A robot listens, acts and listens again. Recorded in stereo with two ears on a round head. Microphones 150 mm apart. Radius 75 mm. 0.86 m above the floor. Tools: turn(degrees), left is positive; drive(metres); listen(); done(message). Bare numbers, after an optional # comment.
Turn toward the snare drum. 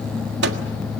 listen()
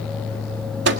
listen()
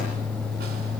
done("I can't make out a snare drum to turn to.")